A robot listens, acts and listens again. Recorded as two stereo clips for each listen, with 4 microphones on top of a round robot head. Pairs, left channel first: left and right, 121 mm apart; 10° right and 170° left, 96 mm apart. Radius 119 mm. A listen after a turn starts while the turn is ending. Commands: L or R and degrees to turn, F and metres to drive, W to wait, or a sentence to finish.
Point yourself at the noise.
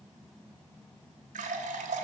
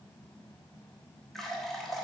R95
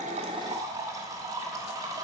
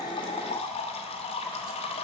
R25
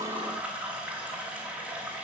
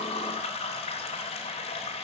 R10
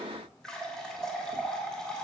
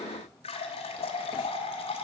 Found it: a running tap, straight ahead.